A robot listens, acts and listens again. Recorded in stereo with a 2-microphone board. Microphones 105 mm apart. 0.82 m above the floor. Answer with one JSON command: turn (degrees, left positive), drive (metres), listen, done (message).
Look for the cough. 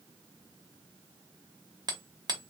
{"listen": true}
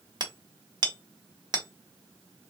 {"listen": true}
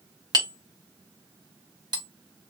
{"done": "I can't make out a cough to turn to."}